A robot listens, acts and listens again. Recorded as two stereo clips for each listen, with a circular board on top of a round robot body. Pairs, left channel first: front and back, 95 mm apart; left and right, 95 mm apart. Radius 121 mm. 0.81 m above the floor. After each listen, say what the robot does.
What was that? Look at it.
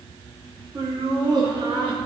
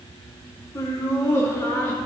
Turn 150° left.
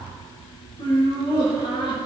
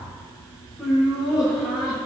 Found it: laughter, straight ahead, over 4 m away.